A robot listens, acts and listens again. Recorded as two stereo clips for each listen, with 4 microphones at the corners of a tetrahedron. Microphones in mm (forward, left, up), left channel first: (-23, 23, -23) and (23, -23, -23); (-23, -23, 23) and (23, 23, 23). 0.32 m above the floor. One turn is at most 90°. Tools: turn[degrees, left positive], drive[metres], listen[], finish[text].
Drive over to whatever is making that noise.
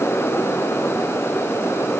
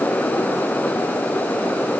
Action: listen[]
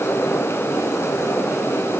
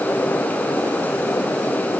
Action: listen[]
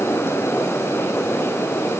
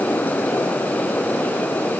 Action: finish[I can't make out anything.]